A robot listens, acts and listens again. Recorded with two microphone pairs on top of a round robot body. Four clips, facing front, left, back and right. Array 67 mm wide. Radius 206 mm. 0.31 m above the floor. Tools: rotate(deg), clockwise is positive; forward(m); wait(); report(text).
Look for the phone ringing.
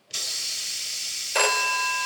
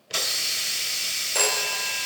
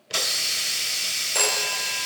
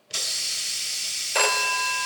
rotate(40)
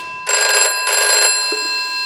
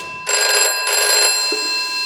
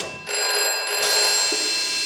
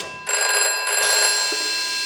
report("Facing the phone ringing, 1 to 2 m away.")